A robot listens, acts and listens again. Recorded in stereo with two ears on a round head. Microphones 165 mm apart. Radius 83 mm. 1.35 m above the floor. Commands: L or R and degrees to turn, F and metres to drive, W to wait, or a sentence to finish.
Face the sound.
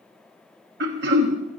R60
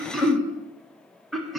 Facing the throat clearing.